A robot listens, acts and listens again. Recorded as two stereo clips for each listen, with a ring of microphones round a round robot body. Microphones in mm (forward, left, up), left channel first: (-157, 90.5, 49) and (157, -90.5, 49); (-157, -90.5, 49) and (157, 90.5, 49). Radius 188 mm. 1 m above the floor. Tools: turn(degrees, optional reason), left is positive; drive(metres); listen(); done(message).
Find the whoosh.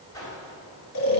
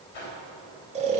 turn(degrees=-130, reason="The whoosh: 130° right.")
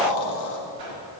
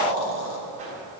turn(degrees=-40, reason="The whoosh is now 40° right.")
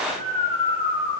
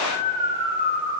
listen()
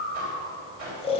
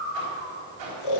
done("Found it: a whoosh, straight ahead.")